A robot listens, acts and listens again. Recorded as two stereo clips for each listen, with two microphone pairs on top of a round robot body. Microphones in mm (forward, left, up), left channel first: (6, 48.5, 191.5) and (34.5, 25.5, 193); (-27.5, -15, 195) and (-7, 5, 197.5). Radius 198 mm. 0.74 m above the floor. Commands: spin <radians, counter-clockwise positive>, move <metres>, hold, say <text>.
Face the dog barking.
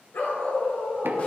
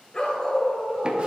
spin 2.71
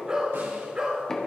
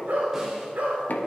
spin 0.35
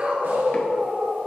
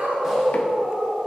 say Facing the dog barking, 2 to 4 m away.